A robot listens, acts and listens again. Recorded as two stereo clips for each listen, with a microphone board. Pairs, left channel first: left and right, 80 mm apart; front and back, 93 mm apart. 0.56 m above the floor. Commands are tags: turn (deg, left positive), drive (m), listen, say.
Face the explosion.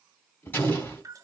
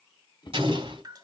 <turn deg="160"/>
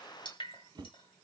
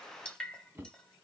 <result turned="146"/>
<turn deg="15"/>
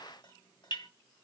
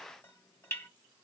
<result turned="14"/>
<say>I heard an explosion from this way, but can't make it out now.</say>